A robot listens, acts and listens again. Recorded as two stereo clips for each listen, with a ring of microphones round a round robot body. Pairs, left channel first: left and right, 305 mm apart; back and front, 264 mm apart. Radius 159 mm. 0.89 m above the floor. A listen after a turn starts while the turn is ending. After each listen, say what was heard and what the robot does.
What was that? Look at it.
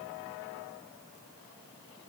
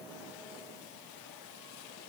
Keep listening.
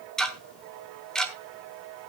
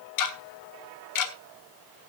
The ticking: straight behind. Turn 180° left.
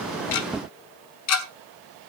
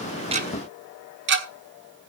The ticking is now 50° left. Turn 50° left.
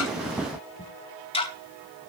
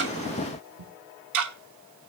The ticking is now 15° left. Turn 15° left.
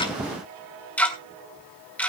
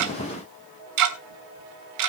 Facing the ticking.